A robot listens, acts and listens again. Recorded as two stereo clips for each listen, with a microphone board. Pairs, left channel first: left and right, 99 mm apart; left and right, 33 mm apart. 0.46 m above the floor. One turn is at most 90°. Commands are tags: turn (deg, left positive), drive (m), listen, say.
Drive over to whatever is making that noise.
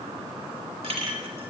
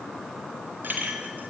<turn deg="-90"/>
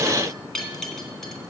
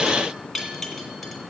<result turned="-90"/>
<drive m="1.0"/>
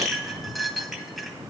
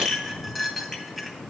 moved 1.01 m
<drive m="1.0"/>
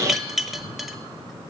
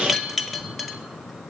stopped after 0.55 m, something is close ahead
<say>Arrived at the clink, straight ahead.</say>